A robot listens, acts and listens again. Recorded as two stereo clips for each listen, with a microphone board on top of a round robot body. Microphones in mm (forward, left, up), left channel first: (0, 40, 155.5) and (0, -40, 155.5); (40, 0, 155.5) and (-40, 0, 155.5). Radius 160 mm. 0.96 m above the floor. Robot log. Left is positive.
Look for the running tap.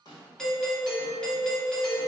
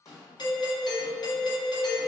cmd idle
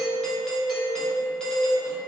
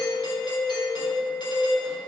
cmd idle
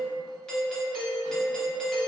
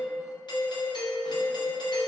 end: I can't make out a running tap, only a doorbell and a snare drum.